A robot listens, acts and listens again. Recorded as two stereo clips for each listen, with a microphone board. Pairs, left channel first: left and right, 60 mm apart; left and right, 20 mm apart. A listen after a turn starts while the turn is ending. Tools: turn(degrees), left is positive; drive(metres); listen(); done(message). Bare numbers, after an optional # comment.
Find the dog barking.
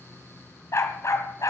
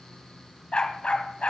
# The dog barking: about 65° left or 115° left.
turn(65)
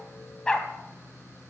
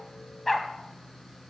# So it is at 15° left.
turn(15)
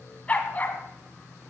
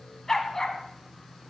# The dog barking is now 30° left.
turn(30)
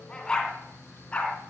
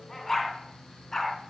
# The dog barking is now 20° left.
turn(20)
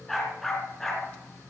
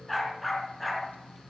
done("Facing the dog barking.")